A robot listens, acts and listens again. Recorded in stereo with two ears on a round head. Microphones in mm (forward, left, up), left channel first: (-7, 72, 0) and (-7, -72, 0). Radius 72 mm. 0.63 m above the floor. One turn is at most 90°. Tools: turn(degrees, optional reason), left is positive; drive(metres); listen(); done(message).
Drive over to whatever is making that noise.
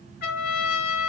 turn(degrees=65, reason="The trumpet: about 65° left or 115° left.")
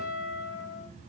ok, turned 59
turn(degrees=55, reason="So it is at 55° left.")
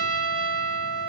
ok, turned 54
drive(metres=1.0)
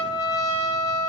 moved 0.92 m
drive(metres=1.0)
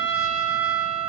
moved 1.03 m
drive(metres=1.0)
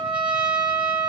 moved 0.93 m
drive(metres=1.0)
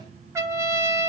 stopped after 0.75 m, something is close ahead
turn(degrees=-20, reason="The trumpet is now 20° right.")
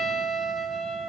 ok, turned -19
done("Arrived at the trumpet, straight ahead.")